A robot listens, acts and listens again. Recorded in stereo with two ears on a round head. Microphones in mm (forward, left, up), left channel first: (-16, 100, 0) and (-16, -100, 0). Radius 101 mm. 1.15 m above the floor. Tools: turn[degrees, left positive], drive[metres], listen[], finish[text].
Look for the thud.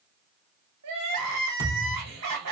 Thought: The thud: about 40° left or 140° left.
Action: turn[40]
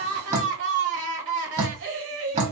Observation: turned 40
Action: listen[]
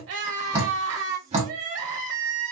Action: finish[I heard a thud, but can't make it out now. It was about straight ahead or 100° left.]